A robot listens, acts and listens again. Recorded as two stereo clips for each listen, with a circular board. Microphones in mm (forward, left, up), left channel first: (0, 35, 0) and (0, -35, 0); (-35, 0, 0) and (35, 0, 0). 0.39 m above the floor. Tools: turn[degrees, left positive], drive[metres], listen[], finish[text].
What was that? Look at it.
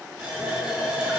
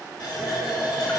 Thought: The running tap: 170° right.
Action: turn[-170]
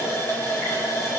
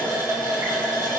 Thought: The running tap is now 40° left.
Action: turn[40]
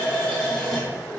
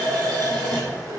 Action: finish[Facing the running tap.]